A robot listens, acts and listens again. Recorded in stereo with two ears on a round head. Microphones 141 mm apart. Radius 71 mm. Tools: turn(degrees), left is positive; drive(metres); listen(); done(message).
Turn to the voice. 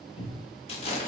listen()
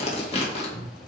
listen()
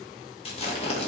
done("I can't make out anyone speaking to turn to.")